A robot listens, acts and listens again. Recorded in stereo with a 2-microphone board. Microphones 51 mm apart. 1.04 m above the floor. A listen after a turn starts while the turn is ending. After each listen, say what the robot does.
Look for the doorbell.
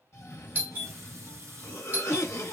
Turn 40° right.
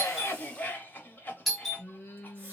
Found it: a doorbell, straight ahead.